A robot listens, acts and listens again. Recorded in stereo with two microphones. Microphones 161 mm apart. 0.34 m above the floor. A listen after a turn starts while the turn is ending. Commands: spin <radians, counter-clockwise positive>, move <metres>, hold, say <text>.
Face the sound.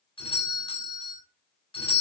spin 0.52
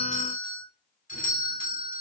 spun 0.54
spin 2.01
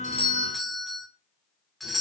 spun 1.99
say Found it: a doorbell, straight ahead, 2 to 4 m away.